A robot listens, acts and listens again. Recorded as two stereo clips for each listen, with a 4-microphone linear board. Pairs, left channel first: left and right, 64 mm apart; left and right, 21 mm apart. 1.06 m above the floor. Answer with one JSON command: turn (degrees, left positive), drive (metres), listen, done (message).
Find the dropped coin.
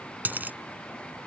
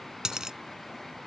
{"turn": -30}
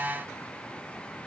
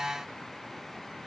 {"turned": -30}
{"listen": true}
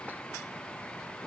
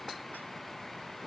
{"done": "I heard a dropped coin, but can't make it out now. It was about straight ahead or 120° right."}